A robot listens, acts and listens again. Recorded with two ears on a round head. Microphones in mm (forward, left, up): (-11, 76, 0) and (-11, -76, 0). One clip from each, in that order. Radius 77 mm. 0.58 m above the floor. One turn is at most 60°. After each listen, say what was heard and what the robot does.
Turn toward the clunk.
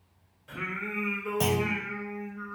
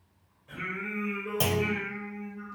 The clunk: about 25° right or 155° right. Turn 25° right.
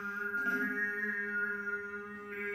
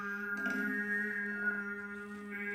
Keep listening.
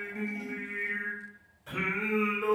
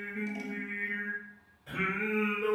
I heard a clunk, but can't make it out now. It was about straight ahead or 130° right.